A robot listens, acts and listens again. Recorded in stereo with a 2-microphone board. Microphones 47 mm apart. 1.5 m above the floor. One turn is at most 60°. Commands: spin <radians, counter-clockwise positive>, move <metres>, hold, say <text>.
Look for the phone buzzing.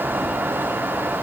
hold
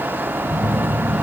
spin -0.61
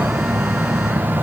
say Found it: a phone buzzing, straight ahead.